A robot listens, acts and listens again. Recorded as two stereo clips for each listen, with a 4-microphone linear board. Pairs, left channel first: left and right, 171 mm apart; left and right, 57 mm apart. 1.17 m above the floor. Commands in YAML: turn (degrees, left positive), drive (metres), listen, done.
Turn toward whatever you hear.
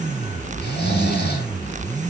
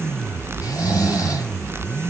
turn: 70
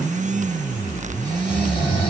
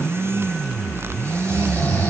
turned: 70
turn: 30
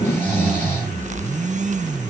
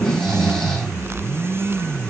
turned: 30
turn: 10
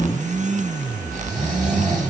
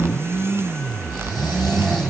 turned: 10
done: "Facing the snoring."